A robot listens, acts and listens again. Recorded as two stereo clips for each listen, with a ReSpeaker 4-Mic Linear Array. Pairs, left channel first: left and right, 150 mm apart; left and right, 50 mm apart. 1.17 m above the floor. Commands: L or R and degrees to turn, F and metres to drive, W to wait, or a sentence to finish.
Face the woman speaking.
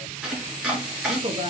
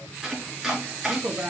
R30
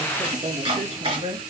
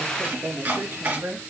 R35
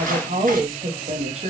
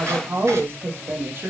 R140
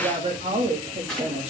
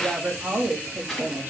R45
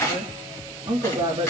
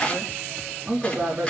R30
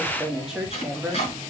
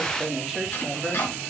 Facing the woman speaking, 2 to 4 m away.